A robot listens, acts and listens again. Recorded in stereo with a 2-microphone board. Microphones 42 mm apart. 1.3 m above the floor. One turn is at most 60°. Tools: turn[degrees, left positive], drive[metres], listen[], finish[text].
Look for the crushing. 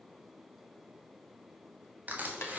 Thought: The crushing: about 45° right or 135° right.
Action: turn[-45]
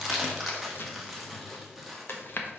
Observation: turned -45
Action: finish[Found it: crushing, straight ahead, 1 to 2 m away.]